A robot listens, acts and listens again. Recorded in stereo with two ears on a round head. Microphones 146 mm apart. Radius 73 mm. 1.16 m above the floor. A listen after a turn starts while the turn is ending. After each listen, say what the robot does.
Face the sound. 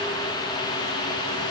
Keep listening.
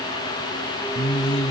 Turn 40° left.
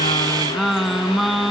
Found it: singing, straight ahead.